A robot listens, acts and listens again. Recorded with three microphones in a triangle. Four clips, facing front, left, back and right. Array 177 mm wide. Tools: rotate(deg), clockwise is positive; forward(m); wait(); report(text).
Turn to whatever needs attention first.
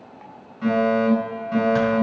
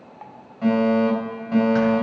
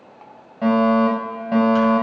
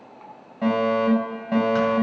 rotate(155)
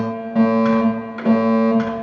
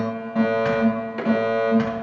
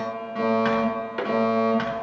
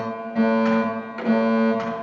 rotate(10)
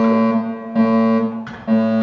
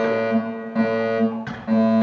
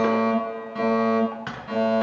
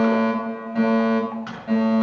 report("Found it: a fire alarm, straight ahead, over 4 m away.")